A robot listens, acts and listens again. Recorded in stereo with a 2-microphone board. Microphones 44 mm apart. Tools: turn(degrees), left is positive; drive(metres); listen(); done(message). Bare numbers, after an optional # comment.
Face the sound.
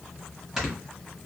turn(-30)
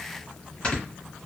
# So it is at 25° left.
turn(25)
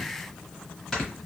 # The snoring is now 10° left.
turn(10)
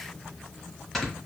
done("Facing the snoring.")